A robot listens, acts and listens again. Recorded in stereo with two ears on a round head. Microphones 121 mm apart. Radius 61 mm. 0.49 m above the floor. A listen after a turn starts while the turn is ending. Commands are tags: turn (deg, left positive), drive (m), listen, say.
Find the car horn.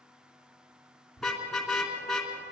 <turn deg="30"/>
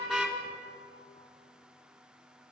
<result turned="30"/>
<listen/>
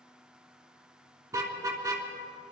<turn deg="-25"/>
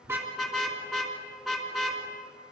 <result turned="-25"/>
<say>Found it: a car horn, straight ahead.</say>